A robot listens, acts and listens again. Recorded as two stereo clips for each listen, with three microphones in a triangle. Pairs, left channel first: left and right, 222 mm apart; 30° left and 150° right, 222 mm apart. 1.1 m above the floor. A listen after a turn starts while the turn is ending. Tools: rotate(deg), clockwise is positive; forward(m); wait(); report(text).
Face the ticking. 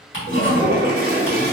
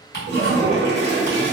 rotate(-70)
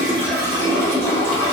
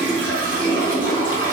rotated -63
wait()
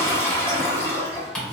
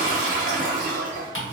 report("Found it: ticking, straight ahead, 1 to 2 m away.")